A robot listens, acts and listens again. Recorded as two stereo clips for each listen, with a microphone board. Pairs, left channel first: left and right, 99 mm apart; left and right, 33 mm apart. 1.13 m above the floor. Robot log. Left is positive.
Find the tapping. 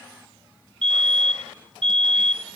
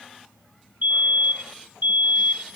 cmd idle
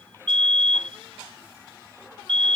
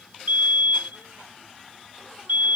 cmd idle
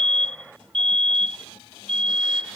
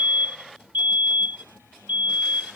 end: I can't make out tapping, only a fire alarm.